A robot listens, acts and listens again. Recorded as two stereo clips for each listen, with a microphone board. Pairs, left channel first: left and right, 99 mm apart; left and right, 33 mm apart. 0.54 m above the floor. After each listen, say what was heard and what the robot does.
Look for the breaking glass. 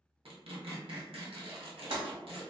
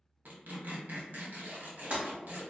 The breaking glass: about 60° right or 120° right. Turn 60° right.
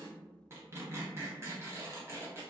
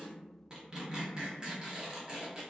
Keep listening.
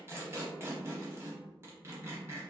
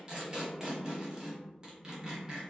I heard breaking glass, but can't make it out now. It was about straight ahead or 60° right.